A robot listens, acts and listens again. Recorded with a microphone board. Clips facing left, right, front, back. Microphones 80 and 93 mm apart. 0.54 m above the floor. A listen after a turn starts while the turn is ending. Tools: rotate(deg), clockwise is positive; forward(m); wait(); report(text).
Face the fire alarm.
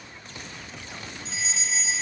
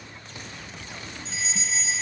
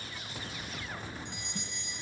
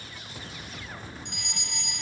rotate(-180)
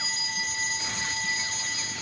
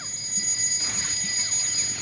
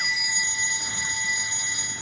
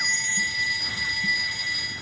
rotate(-65)
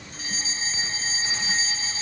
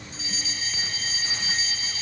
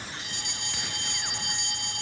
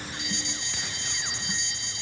rotate(-30)
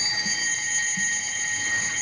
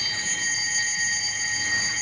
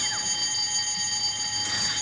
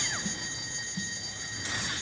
report("Found it: a fire alarm, straight ahead.")